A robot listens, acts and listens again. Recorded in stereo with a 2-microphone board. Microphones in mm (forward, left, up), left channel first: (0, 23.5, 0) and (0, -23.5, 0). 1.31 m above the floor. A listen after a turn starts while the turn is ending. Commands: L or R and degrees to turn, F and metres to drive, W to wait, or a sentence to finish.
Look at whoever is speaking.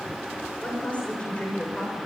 L25
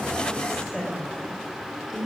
Found it: a woman speaking, straight ahead.